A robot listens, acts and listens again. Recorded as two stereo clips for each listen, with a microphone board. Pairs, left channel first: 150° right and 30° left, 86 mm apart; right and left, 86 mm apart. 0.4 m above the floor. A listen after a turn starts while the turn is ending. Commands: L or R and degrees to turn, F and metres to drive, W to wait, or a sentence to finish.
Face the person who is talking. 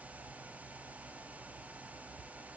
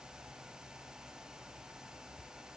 W
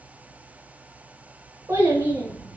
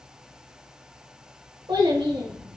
L80
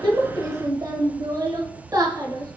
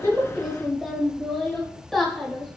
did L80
Found it: a child speaking, straight ahead.